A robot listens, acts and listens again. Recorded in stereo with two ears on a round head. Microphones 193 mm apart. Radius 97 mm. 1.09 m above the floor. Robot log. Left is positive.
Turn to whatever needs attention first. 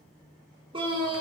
note: The scream: about 25° right or 155° right.
cmd yaw -25
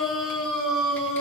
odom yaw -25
end: Found it: a scream, straight ahead, 2 to 4 m away.